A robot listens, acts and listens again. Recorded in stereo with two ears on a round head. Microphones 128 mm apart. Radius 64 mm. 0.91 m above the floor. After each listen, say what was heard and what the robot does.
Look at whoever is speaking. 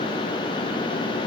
Keep listening.
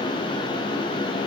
Keep listening.
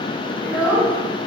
Turn 30° right.
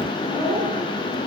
So it is at 125° right. Turn 125° right.
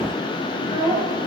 The child speaking is now 40° left. Turn 40° left.
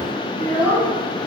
Found it: a child speaking, straight ahead.